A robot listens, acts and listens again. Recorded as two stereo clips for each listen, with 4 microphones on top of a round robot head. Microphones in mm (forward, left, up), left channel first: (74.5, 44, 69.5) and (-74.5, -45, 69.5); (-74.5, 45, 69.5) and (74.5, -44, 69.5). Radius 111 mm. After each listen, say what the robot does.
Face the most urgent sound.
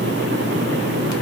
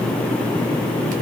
Keep listening.
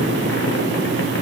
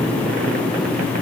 Keep listening.
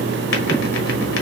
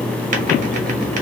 I can't make out anything urgent.